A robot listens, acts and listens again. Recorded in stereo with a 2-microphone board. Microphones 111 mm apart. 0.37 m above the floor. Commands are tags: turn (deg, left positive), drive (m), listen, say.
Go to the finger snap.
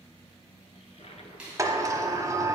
<turn deg="-30"/>
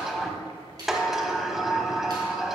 <turn deg="-140"/>
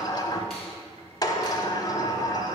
<listen/>
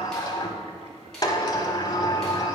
<listen/>
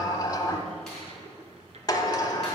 <say>Facing where the finger snap came from. I can't hear it now. I did not reach it.</say>